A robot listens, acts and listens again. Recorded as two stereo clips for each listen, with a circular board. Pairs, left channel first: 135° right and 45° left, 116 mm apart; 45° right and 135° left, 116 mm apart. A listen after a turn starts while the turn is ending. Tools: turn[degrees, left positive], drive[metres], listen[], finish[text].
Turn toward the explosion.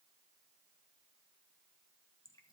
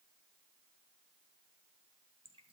Action: listen[]
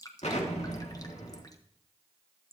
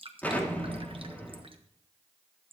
Thought: The explosion: 120° right.
Action: turn[-120]
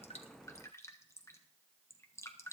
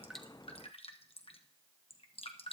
Action: finish[Facing where the explosion came from. I can't hear it now.]